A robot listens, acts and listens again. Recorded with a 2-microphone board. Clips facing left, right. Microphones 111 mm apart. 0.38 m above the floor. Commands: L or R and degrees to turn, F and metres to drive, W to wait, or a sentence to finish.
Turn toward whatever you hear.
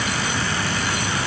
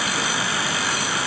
W
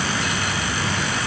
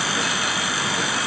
W
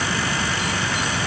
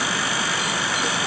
I can't make out anything to turn to.